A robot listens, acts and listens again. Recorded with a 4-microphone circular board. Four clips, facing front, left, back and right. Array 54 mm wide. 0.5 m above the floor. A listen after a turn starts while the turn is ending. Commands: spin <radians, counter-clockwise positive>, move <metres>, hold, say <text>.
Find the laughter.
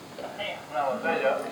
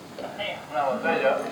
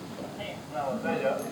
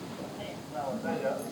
spin 1.13
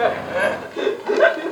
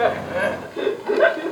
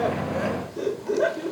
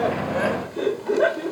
spin 0.52
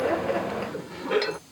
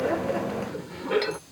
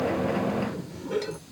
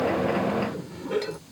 spin 0.61
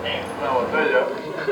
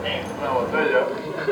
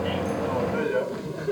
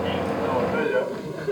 spin 0.61
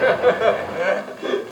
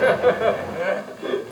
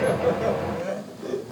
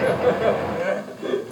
spin 0.17
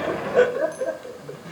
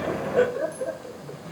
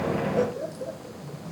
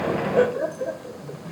say Found it: laughter, straight ahead.